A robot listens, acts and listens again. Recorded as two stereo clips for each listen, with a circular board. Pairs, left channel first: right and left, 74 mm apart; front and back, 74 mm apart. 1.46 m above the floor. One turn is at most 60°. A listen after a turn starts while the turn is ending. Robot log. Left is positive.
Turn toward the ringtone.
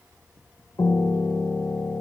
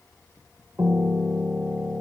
cmd idle
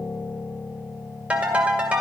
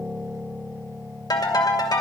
note: The ringtone: 20° left.
cmd yaw +20
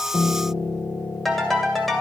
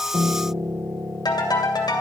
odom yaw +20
end: Facing the ringtone, 2 to 4 m away.